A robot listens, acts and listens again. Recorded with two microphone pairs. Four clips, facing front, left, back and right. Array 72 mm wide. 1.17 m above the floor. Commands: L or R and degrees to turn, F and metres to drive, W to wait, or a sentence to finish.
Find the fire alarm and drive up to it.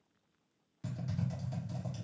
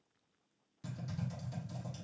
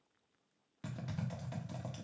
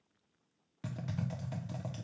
W
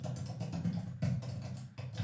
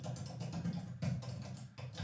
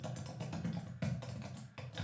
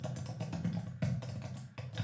W
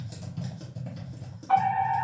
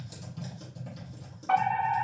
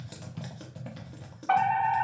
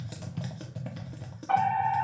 L165
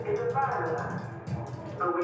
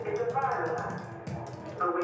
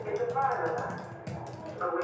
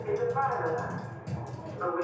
L65
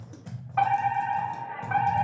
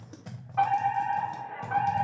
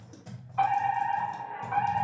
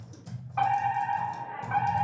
F1.0
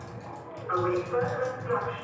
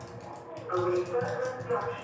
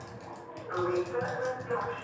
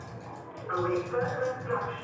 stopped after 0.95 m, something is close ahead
R10
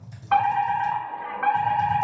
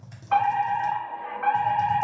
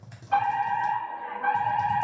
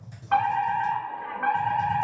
I am next to the fire alarm.